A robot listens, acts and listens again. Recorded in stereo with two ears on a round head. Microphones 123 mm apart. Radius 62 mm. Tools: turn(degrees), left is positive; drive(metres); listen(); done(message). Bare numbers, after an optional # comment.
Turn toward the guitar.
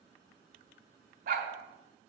listen()
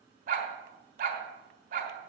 listen()
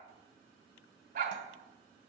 done("I can't make out a guitar to turn to.")